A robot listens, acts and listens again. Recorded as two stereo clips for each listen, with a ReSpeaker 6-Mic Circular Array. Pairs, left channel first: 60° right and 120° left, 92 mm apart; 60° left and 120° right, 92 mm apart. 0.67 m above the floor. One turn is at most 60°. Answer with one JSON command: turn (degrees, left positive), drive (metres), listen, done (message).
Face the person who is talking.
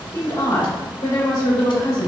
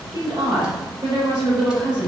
{"turn": -60}
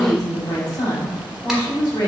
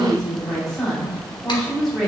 {"turn": -25}
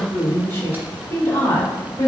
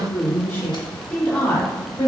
{"turn": -10}
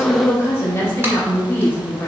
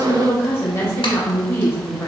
{"done": "Found it: a woman speaking, straight ahead."}